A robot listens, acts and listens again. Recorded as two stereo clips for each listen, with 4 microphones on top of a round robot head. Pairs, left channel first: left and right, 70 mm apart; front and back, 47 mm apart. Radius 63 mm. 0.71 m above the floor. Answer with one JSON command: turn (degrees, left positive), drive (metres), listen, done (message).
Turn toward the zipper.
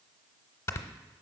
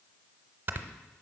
{"listen": true}
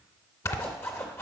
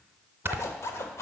{"turn": 25}
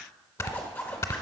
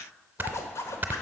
{"turn": 20}
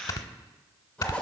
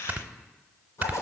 {"turn": 10}
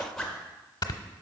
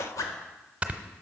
{"done": "Found it: a zipper, straight ahead."}